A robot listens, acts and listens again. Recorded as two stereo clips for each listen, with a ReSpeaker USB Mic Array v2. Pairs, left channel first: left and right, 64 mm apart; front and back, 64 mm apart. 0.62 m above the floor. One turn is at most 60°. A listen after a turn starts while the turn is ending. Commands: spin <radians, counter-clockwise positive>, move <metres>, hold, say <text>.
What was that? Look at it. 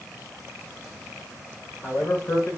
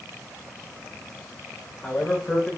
spin 1.05
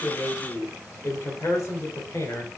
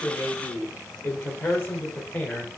spin 1.05
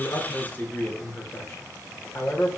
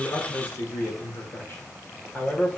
spin 0.96
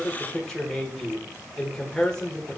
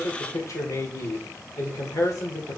spin 0.26
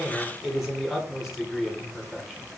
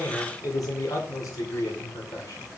say Facing the man speaking.